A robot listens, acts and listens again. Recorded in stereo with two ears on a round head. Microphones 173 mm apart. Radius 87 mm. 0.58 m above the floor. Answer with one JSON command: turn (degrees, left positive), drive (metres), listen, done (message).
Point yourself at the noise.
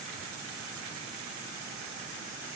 {"listen": true}
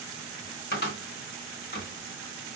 {"turn": 50}
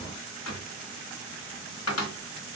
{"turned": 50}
{"turn": 75}
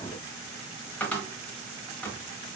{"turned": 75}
{"done": "Facing the cupboard door."}